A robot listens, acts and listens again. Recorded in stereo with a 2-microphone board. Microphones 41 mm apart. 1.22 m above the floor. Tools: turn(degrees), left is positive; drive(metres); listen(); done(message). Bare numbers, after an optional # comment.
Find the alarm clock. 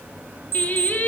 # The alarm clock: about 60° right or 120° right.
turn(-60)
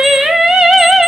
listen()
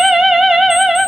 listen()
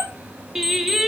done("I heard an alarm clock, but can't make it out now. It was about straight ahead or 60° right.")